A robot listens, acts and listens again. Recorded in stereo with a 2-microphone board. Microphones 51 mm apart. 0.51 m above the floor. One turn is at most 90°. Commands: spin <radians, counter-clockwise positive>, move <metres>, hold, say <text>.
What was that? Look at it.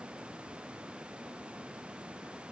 hold
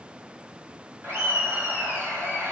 spin -0.96
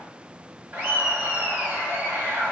spin -0.79
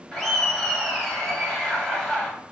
spin 0.17
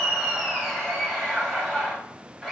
say Found it: laughter, straight ahead.